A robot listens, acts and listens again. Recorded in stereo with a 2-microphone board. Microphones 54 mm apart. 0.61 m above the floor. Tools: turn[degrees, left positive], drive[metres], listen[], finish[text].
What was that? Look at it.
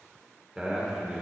Action: turn[-30]
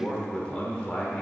Thought: So it is at 25° left.
Action: turn[25]
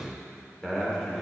Action: finish[Facing the man speaking, 1 to 2 m away.]